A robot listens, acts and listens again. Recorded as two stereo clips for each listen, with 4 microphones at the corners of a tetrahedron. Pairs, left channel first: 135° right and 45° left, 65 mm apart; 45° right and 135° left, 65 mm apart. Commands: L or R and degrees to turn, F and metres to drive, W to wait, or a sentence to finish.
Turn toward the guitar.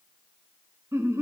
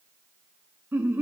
W
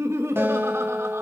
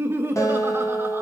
R10
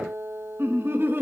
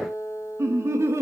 Found it: a guitar, straight ahead.